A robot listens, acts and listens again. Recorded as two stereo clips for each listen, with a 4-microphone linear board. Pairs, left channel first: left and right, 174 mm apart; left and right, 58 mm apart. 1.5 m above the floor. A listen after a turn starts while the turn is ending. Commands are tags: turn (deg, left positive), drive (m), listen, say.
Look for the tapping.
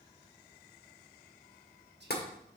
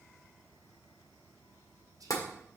<turn deg="70"/>
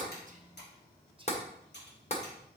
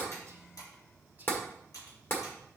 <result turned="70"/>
<turn deg="40"/>
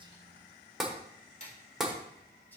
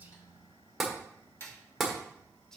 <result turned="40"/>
<say>Found it: tapping, straight ahead, 1 to 2 m away.</say>